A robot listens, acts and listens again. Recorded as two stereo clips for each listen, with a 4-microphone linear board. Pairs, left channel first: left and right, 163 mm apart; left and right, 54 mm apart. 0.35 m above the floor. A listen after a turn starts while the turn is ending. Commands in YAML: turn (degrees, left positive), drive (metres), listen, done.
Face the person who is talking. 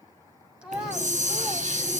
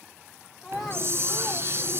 turn: -30
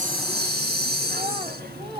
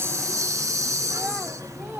turn: -145
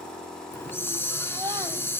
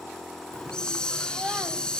listen: true
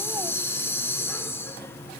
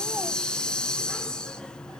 listen: true
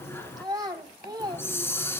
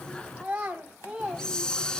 turn: -30
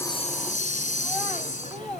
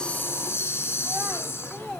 listen: true
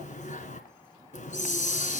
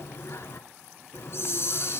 listen: true
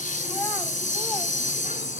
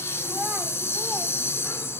done: "Facing where the child speaking came from. I can't hear it now."